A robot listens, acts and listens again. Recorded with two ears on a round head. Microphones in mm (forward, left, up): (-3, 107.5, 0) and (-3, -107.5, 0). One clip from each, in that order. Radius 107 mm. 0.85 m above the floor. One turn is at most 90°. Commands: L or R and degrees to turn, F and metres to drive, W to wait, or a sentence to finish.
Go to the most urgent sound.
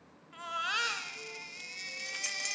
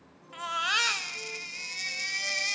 R25
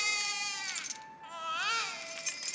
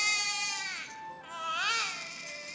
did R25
F1.0
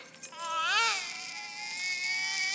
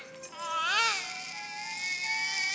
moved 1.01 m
F1.0
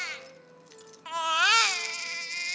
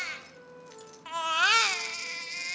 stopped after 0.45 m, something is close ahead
L15
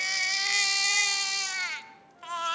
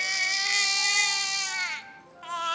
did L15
Arrived at the baby crying, straight ahead.